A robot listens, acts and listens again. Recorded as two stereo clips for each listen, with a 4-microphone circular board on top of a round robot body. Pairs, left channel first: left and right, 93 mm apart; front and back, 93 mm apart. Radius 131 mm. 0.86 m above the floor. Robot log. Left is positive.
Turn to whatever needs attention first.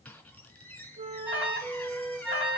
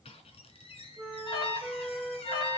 note: The alarm: 20° right.
cmd yaw -20
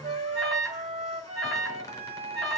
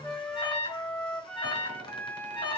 end: Facing the alarm, over 4 m away.